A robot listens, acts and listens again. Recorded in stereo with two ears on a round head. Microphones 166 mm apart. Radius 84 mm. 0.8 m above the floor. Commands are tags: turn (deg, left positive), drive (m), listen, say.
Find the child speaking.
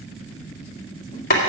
<listen/>
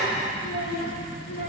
<turn deg="70"/>
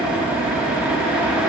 <listen/>
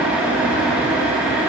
<listen/>
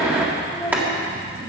<say>Found it: a child speaking, straight ahead, 2 to 4 m away.</say>